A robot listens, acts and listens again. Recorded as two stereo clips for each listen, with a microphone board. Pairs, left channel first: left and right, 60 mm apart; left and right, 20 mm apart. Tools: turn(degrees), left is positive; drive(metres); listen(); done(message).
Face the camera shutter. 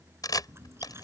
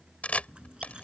turn(degrees=90)
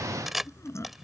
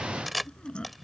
done("Found it: a camera shutter, straight ahead.")